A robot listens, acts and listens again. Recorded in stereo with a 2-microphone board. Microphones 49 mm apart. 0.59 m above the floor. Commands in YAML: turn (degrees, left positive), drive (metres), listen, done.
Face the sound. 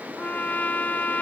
turn: 35
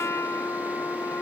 turn: 115
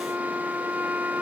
turn: -35
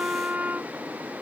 turn: -30
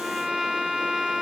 done: "Facing the trumpet."